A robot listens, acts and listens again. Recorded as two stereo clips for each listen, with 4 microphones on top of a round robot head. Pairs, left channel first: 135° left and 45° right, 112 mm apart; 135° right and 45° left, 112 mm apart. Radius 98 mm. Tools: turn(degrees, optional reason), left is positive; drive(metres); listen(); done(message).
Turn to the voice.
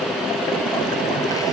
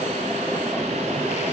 listen()
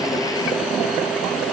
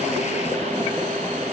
listen()
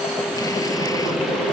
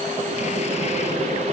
done("I can't make out anyone speaking.")